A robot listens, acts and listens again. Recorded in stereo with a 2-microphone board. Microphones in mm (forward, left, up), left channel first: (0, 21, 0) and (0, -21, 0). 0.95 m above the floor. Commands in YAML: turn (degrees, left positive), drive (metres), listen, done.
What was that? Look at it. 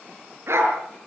turn: -90
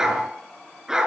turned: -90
turn: -15
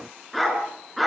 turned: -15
done: "Facing the dog barking."